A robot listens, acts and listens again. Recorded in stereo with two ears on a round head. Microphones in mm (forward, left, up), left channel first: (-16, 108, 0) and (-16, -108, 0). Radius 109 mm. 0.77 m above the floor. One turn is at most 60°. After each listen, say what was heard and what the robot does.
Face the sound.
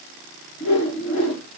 The whoosh: about 60° left or 120° left. Turn 60° left.
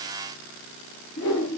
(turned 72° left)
So it is at 45° left. Turn 45° left.
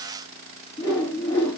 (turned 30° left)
The whoosh is now 15° left. Turn 15° left.
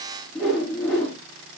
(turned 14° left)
Facing the whoosh.